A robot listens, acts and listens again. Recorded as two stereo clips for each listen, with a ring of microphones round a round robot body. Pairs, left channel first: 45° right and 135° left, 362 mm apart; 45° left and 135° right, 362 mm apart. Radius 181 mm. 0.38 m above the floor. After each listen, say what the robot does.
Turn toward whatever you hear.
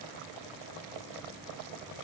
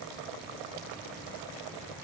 Keep listening.
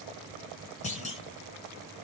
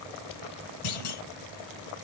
Turn 25° left.
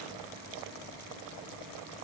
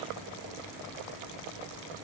Facing where the clunk came from. I can't hear it now.